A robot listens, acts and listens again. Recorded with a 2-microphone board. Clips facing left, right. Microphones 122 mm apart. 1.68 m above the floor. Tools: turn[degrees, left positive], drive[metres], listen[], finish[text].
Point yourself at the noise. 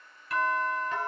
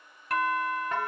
Thought: The doorbell: about 60° right or 120° right.
Action: turn[-60]
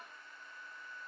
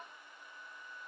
Action: listen[]
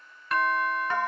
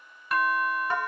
Thought: So it is at 10° right.
Action: turn[-10]
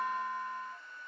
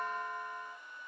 Action: finish[Facing the doorbell, 1 to 2 m away.]